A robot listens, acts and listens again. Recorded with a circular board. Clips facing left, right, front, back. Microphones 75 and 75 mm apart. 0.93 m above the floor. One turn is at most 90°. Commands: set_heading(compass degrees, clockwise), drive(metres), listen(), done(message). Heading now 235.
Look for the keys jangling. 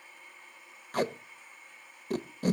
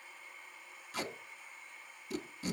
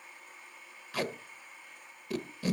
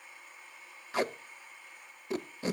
listen()
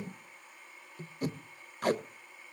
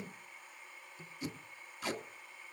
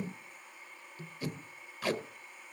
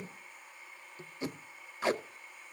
listen()
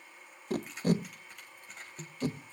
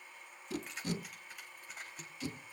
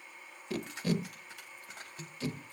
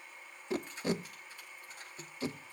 done("Found it: keys jangling, straight ahead, over 4 m away.")